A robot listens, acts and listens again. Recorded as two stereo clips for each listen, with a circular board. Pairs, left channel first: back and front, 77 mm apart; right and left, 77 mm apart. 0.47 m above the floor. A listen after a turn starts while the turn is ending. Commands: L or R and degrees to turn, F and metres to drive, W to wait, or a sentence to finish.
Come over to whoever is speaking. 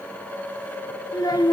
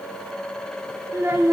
L145
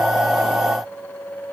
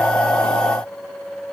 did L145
W
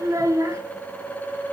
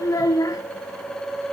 R45
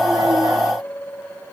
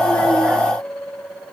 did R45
W
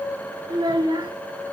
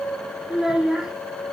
L10
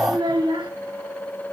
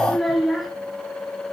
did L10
F1.0
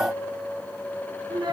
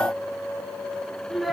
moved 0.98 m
F1.0
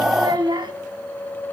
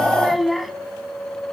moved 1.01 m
F1.0
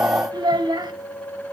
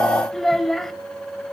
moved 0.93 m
F1.0
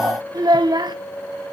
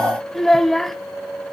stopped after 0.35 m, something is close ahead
I am next to the child speaking.